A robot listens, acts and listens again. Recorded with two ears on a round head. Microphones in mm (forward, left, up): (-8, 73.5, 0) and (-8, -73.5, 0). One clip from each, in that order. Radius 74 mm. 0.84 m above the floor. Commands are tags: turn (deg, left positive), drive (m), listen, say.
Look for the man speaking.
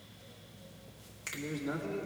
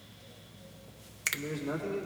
<turn deg="30"/>
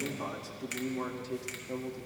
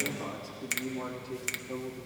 <turn deg="130"/>
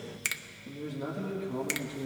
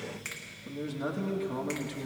<turn deg="-45"/>
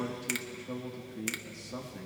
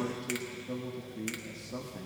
<turn deg="15"/>
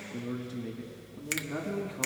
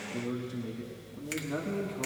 <say>Facing the man speaking.</say>